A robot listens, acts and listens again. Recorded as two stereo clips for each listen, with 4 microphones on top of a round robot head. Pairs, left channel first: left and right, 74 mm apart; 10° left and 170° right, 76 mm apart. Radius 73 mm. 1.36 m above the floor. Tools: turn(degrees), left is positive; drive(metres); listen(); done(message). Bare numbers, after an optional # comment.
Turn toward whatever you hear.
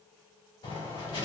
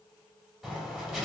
# The writing: 105° left.
turn(105)
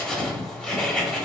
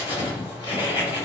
# The writing is now 10° left.
turn(10)
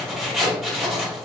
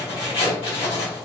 done("Facing the writing.")